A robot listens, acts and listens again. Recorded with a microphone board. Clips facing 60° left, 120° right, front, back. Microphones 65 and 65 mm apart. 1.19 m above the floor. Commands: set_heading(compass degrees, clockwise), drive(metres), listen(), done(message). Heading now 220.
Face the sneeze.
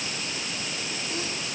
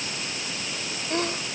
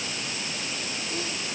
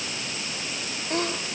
set_heading(10)
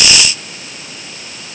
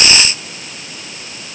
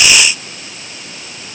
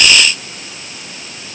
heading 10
done("Facing where the sneeze came from. I can't hear it now.")